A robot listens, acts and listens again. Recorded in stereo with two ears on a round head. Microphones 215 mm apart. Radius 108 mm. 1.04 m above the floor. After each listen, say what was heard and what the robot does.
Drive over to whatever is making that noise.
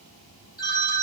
The phone ringing: about 20° left or 160° left. Turn 20° left.
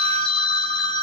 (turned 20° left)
So it is at 140° left. Turn 140° left.
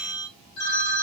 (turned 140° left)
The phone ringing is now 40° left. Turn 40° left.
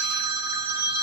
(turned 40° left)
The phone ringing is now 10° right. Turn 10° right.
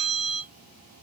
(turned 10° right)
Drive 1.0 m forward.
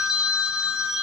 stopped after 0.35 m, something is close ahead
Blocked. The phone ringing is further on, straight ahead.